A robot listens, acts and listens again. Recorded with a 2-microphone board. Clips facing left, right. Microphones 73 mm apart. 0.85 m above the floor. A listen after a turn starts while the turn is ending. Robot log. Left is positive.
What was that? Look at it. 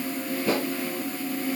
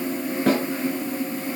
cmd yaw -90
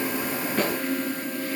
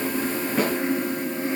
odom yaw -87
note: So it is at 10° right.
cmd yaw -10
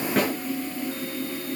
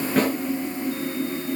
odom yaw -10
cmd idle
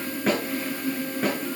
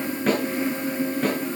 end: Facing the snare drum, over 4 m away.